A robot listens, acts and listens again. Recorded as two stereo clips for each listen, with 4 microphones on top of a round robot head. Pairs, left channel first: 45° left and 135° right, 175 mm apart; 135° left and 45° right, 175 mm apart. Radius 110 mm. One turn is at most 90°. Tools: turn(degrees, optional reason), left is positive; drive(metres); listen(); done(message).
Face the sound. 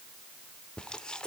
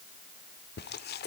turn(degrees=90, reason="The chewing: 130° left.")
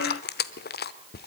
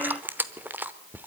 turn(degrees=35, reason="The chewing is now 35° left.")
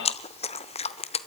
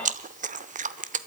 done("Facing the chewing.")